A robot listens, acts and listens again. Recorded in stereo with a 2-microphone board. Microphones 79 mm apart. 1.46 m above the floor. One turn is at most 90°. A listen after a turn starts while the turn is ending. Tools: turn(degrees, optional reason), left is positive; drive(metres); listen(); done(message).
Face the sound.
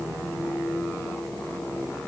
listen()
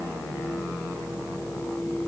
listen()
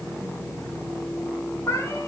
turn(degrees=35, reason="The cat meowing: about 35° left or 145° left.")
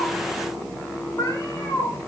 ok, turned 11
turn(degrees=90, reason="So it is at 135° left.")
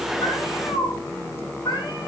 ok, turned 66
turn(degrees=65, reason="The cat meowing is now 65° left.")
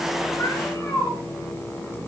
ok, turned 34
turn(degrees=35, reason="The cat meowing is now 35° left.")
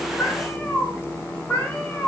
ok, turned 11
turn(degrees=20, reason="The cat meowing is now 20° left.")
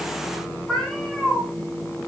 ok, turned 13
done("Facing the cat meowing.")